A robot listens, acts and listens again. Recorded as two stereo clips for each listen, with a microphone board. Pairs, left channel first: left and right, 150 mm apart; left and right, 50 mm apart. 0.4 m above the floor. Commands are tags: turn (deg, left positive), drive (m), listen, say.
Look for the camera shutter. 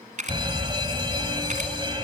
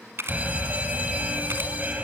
<turn deg="-60"/>
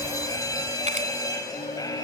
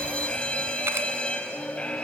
<listen/>
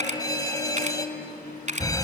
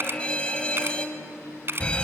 <turn deg="-55"/>
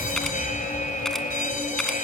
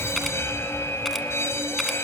<listen/>
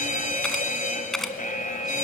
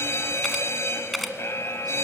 <say>Found it: a camera shutter, straight ahead, 1 to 2 m away.</say>